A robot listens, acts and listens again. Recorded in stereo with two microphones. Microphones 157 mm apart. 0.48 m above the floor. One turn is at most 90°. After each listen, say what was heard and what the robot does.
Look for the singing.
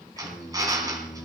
Turn 30° left.
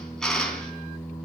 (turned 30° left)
Turn 30° left.
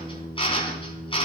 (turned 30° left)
The singing: about 20° left or 160° left. Turn 20° left.
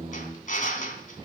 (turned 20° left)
So it is at 145° left. Turn 90° left.
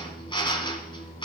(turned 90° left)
The singing is now 55° left. Turn 55° left.
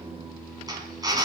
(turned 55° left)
Found it: singing, straight ahead, 2 to 4 m away.